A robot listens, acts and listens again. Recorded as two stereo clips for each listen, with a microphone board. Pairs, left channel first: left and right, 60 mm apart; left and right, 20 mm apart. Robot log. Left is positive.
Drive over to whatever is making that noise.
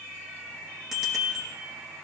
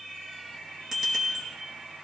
cmd yaw -30
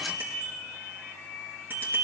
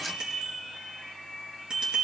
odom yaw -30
note: So it is at 145° right.
cmd yaw -145
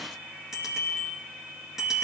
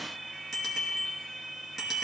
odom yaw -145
cmd fwd 1.0
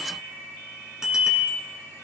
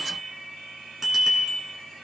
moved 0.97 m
note: The bicycle bell is now 10° right.
cmd yaw -10
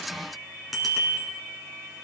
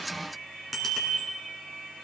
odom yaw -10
cmd fwd 1.0
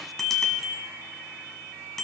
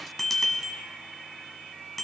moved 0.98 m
cmd fwd 1.0
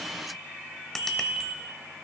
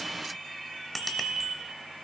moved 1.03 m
note: The bicycle bell is now 10° left.
cmd yaw +10
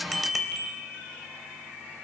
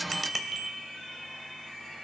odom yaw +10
cmd fwd 1.0
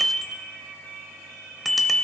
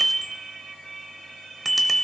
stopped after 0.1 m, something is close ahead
end: Arrived at the bicycle bell, straight ahead.